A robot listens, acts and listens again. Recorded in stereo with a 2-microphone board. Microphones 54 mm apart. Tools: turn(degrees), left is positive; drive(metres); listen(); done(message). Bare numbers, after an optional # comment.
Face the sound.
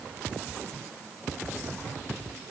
listen()
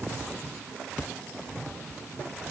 listen()
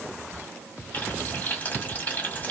# The frying: about 30° left or 150° left.
turn(30)
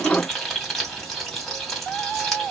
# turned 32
done("Found it: frying, straight ahead.")